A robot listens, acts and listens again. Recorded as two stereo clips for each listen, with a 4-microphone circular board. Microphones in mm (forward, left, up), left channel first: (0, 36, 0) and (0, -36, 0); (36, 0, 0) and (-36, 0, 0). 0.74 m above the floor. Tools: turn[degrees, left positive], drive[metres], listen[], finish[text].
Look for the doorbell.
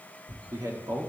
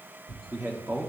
Action: listen[]
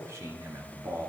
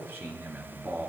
Action: listen[]
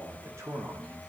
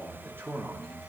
Action: finish[I can't make out a doorbell to turn to.]